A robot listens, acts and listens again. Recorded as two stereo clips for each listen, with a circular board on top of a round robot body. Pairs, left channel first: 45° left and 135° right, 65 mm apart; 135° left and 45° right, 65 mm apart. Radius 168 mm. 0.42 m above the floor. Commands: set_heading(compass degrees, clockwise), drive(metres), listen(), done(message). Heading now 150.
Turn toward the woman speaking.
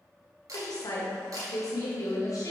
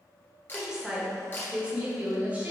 set_heading(135)
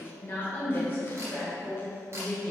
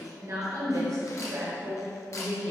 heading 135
set_heading(155)
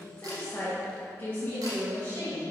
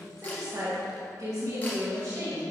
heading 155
set_heading(165)
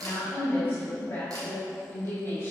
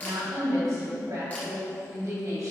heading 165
done("Facing the woman speaking, 2 to 4 m away.")